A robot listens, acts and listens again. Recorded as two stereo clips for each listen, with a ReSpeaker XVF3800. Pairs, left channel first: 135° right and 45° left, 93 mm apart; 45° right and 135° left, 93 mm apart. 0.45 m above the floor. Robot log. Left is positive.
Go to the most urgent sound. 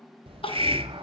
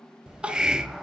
note: The crying: 145° right.
cmd yaw -145
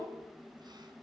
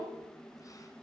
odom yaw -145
cmd idle
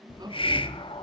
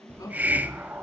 cmd fwd 1.0
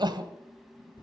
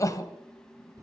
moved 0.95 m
cmd fwd 1.0
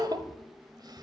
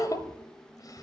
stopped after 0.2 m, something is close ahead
end: Arrived at the crying, straight ahead.